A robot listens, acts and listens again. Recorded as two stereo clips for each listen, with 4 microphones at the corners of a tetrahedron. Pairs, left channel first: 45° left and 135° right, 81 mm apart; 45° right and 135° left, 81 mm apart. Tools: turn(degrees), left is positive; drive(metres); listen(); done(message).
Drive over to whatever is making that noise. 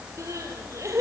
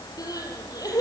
turn(degrees=-85)
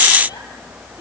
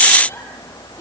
listen()
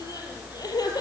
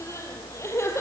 turn(degrees=10)
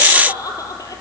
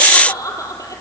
drive(metres=1.0)
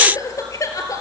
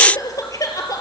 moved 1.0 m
drive(metres=1.0)
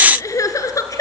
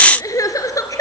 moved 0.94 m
drive(metres=1.0)
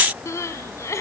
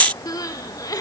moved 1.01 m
drive(metres=1.0)
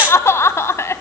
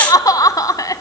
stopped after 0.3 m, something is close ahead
turn(degrees=-10)
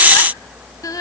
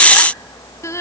done("I am next to the crying.")